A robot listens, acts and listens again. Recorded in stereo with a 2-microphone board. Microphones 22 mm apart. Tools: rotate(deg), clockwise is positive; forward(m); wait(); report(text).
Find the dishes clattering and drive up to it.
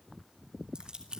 wait()
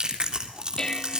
rotate(-35)
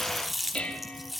rotate(-110)
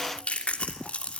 wait()
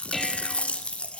forward(1.0)
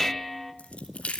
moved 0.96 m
rotate(-10)
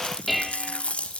forward(1.0)
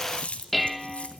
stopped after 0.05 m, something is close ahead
report("Arrived at the dishes clattering, straight ahead.")